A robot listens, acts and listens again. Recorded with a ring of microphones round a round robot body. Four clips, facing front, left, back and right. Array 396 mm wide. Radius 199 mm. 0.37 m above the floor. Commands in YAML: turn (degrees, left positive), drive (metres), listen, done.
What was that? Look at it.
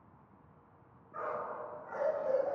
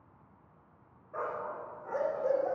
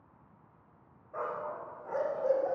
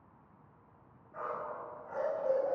turn: 135
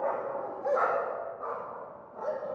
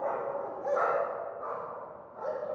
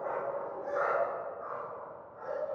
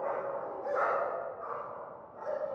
turn: 35
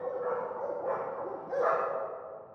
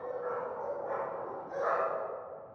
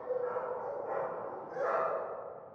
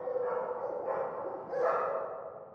turn: -10
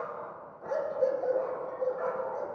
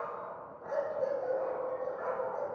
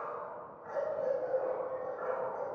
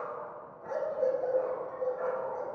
done: "Found it: a dog barking, straight ahead, over 4 m away."